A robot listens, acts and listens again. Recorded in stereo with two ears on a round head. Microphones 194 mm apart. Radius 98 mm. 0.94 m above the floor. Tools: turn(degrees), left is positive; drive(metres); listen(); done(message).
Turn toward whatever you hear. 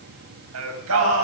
turn(degrees=-70)
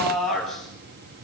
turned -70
done("Facing the singing, over 4 m away.")